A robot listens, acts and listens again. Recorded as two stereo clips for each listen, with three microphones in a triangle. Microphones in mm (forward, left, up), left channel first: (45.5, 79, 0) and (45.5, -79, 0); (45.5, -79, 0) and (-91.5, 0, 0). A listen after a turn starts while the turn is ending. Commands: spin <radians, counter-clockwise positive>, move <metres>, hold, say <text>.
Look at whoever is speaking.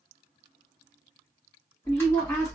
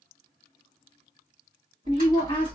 spin 0.35
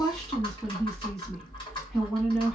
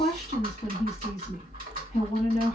say Found it: a woman speaking, straight ahead.